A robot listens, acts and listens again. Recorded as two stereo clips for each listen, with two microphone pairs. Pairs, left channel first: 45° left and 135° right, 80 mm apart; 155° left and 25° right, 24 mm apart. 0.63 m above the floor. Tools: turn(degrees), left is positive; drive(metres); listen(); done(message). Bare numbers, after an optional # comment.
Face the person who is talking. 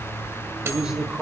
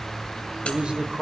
# The man speaking: 55° right.
turn(-55)
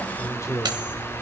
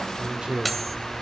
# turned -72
done("Found it: a man speaking, straight ahead.")